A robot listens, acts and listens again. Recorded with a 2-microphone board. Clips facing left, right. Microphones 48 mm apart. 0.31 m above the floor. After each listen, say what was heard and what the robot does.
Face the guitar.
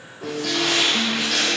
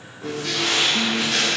The guitar: about 60° left or 120° left. Turn 60° left.
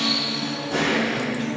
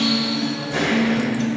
Found it: a guitar, straight ahead.